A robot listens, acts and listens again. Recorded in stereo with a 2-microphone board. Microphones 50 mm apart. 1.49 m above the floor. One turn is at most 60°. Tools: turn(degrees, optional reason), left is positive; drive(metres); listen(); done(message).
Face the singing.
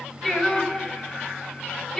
turn(degrees=30)
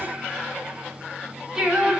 turn(degrees=-10, reason="So it is at 10° right.")
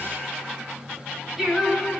done("Facing the singing, over 4 m away.")